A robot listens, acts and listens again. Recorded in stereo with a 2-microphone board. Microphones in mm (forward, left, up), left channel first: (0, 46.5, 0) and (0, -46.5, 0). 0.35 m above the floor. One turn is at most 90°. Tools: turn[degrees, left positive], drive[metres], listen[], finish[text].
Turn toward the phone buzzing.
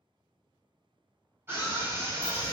Action: listen[]
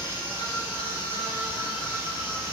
Action: listen[]
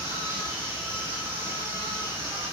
Action: finish[I can't make out a phone buzzing, only a scream.]